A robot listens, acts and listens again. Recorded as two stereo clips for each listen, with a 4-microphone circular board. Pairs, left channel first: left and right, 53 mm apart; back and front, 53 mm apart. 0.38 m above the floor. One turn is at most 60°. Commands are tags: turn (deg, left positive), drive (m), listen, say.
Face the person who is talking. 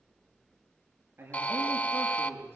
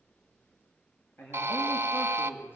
<turn deg="-60"/>
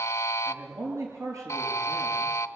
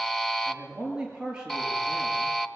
<turn deg="-60"/>
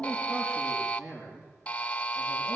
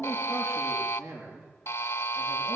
<turn deg="-15"/>
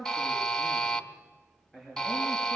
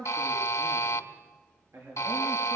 <say>Found it: a man speaking, straight ahead, over 4 m away.</say>